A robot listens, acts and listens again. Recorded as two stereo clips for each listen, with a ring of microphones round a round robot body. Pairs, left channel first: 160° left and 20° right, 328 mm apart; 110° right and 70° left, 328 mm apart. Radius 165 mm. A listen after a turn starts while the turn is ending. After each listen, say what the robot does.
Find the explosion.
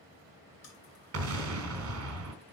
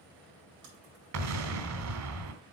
Turn 25° left.
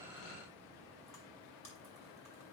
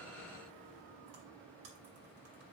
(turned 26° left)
I heard an explosion from this way, but can't make it out now.